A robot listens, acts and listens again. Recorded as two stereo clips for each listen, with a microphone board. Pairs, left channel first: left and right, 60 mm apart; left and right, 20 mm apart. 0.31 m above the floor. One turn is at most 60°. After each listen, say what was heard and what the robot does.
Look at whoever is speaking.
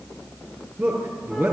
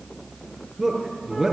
The man speaking: about 45° right or 135° right. Turn 45° right.
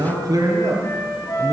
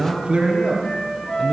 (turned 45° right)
So it is at 90° right. Turn 60° right.
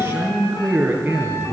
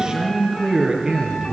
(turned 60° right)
The man speaking is now 25° right. Turn 25° right.
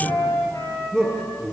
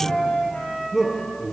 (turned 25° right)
Facing the man speaking.